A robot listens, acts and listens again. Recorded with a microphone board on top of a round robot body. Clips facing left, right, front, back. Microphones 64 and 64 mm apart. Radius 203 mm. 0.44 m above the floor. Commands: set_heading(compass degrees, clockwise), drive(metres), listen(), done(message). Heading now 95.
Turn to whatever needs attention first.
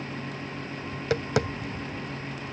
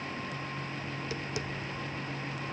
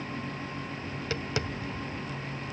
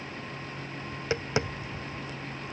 listen()
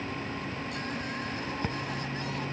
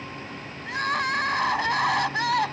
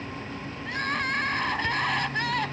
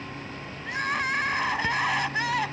set_heading(190)
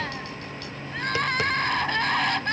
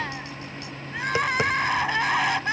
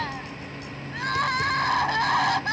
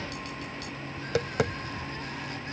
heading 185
done("Found it: crying, straight ahead.")